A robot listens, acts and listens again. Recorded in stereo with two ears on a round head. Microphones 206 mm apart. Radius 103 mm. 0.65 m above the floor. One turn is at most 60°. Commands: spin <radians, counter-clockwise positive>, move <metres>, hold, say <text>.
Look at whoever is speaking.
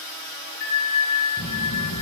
spin 1.05
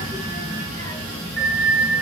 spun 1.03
spin 0.35
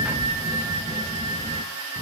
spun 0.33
say Facing the child speaking.